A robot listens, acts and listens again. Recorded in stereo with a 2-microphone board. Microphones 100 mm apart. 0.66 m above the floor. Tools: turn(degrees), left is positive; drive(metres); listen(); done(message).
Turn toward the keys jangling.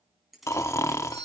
turn(degrees=30)
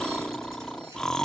listen()
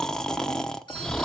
listen()
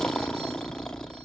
done("I heard keys jangling, but can't make it out now. It was about 30° right or 150° left.")